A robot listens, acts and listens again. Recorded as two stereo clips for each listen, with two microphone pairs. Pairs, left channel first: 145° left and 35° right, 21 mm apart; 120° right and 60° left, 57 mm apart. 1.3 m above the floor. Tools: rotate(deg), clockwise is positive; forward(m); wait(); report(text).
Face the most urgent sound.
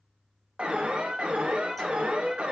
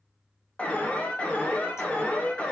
rotate(55)
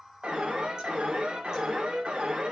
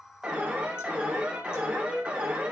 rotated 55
rotate(10)
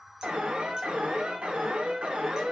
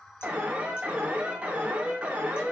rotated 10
rotate(10)
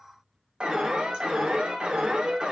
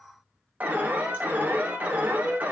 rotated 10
report("Facing the alarm.")